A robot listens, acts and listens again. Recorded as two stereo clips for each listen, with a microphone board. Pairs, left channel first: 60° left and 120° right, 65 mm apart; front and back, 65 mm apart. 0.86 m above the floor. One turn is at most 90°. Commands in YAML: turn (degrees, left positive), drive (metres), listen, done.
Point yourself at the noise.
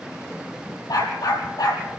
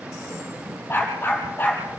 turn: 60
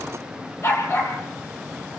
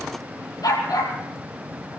turn: 15
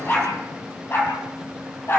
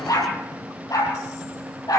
turn: 10
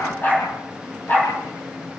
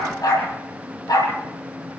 done: "Found it: a dog barking, straight ahead, over 4 m away."